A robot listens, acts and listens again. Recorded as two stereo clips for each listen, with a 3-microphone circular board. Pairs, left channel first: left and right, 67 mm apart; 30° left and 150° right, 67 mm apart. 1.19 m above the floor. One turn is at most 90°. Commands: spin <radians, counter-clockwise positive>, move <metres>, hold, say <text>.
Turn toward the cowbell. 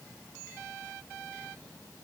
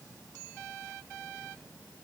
hold
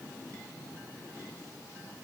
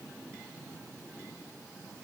hold
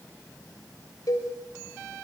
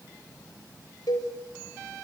spin 0.96
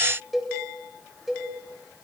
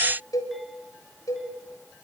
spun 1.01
say Found it: a cowbell, straight ahead.